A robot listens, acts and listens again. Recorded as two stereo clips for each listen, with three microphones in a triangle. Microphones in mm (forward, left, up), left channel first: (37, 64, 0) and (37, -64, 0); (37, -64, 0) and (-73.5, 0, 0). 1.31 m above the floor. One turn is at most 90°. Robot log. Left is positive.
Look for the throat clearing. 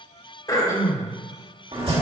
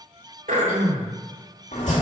note: The throat clearing: 150° left.
cmd yaw +90
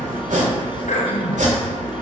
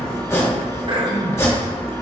note: The throat clearing is now 100° left.
cmd yaw +90
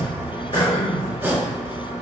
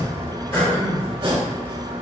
note: The throat clearing is now 40° left.
cmd yaw +40
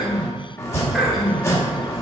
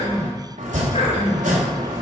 end: Facing the throat clearing.